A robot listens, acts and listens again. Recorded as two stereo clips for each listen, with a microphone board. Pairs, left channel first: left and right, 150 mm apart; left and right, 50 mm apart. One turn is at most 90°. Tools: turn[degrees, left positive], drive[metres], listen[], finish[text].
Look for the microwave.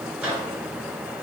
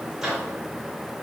Action: turn[-30]
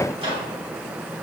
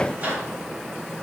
Thought: So it is at 145° right.
Action: turn[-90]
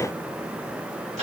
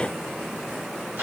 Thought: The microwave is now 55° right.
Action: turn[-55]
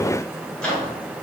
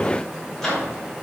Action: finish[Facing the microwave.]